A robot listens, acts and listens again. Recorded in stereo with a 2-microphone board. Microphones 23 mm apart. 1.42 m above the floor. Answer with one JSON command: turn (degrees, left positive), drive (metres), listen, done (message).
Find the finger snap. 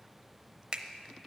{"turn": -45}
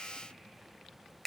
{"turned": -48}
{"done": "Found it: a finger snap, straight ahead."}